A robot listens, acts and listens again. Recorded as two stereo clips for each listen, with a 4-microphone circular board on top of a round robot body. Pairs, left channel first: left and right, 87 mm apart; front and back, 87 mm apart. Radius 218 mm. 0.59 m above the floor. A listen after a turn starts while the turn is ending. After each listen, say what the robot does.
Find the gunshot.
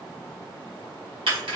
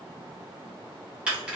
Keep listening.
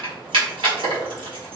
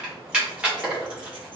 Keep listening.
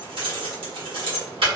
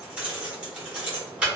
I can't make out a gunshot to turn to.